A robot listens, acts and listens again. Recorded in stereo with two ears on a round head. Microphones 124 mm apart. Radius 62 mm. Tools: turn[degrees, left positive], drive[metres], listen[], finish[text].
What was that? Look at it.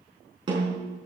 Thought: The snare drum: about 35° right or 145° right.
Action: turn[-35]
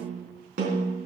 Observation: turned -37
Thought: So it is at 105° right.
Action: turn[-105]
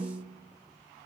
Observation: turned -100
Thought: The snare drum is now 10° right.
Action: turn[-10]
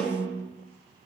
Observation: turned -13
Action: finish[Facing the snare drum, over 4 m away.]